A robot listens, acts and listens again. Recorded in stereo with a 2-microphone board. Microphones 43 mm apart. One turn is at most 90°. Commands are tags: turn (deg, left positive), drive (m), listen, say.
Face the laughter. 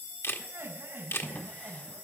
<turn deg="-65"/>
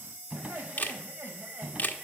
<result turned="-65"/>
<turn deg="-50"/>
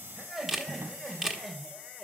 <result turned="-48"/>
<say>Found it: laughter, straight ahead.</say>